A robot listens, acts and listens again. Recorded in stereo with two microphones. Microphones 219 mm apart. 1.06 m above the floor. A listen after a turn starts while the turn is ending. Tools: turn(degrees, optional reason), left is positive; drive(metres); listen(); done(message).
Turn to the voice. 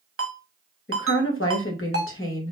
turn(degrees=65, reason="The woman speaking: about 65° left or 115° left.")
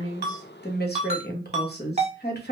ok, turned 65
turn(degrees=50, reason="So it is at 50° left.")
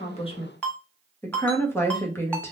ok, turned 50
turn(degrees=10, reason="The woman speaking is now 10° left.")
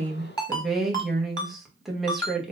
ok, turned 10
done("Facing the woman speaking.")